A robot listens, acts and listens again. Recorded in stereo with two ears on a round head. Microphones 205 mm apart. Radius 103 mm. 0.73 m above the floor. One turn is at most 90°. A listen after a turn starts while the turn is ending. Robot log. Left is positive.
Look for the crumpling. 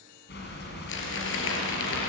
note: The crumpling: about 55° left or 125° left.
cmd yaw +55
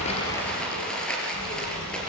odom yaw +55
end: Found it: crumpling, straight ahead.